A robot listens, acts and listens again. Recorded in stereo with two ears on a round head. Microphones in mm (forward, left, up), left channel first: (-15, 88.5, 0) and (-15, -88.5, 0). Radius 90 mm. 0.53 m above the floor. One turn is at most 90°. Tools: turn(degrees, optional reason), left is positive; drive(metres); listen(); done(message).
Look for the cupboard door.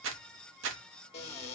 turn(degrees=30, reason="The cupboard door: about 30° left or 150° left.")
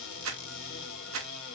turn(degrees=90, reason="So it is at 110° left.")
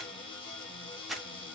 turn(degrees=30, reason="The cupboard door is now 30° left.")
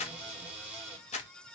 done("Found it: a cupboard door, straight ahead.")